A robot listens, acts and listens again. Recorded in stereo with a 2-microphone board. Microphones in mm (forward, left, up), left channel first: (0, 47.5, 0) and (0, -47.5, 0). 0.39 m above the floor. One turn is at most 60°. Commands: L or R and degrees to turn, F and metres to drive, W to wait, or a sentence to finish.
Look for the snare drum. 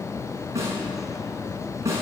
R30
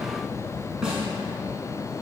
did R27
Found it: a snare drum, straight ahead.